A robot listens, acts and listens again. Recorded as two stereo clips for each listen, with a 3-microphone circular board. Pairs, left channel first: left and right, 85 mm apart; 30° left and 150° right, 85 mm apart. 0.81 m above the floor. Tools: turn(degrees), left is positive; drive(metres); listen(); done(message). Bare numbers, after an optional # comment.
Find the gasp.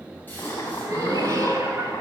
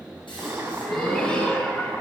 # The gasp: 25° left.
turn(25)
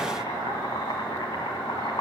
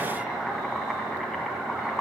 done("I heard a gasp from this way, but can't make it out now.")